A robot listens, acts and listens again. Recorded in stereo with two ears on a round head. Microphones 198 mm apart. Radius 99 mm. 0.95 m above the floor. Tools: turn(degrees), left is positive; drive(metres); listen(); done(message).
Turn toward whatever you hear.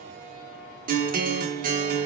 turn(degrees=-40)
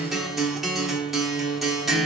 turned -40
done("Facing the guitar.")